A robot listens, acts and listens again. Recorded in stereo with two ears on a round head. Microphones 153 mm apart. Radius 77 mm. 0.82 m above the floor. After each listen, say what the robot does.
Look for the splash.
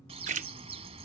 Turn 45° right.
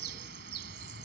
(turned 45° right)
Keep listening.
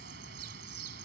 I heard a splash, but can't make it out now. It was about straight ahead or 90° right.